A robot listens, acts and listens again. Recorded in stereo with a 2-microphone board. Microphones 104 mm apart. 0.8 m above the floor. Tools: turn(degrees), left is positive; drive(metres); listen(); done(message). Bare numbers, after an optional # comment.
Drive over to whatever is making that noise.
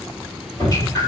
# The dripping: about 35° left or 145° left.
turn(35)
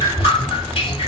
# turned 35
# So it is at 110° left.
turn(110)
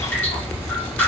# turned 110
# The dripping is now 15° left.
turn(15)
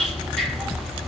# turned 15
drive(1.0)
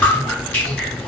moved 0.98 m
# The dripping is now 15° left.
turn(15)
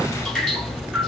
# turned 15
drive(1.0)
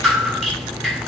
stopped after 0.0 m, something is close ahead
done("Arrived at the dripping, straight ahead.")